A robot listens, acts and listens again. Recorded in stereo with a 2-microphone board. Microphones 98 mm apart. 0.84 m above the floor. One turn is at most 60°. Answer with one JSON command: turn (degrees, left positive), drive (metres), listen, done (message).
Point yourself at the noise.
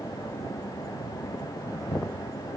{"listen": true}
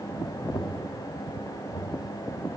{"turn": 60}
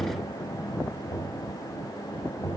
{"turn": 45}
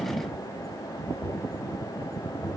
{"turn": 15}
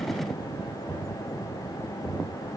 {"done": "Found it: knocking, straight ahead, 2 to 4 m away."}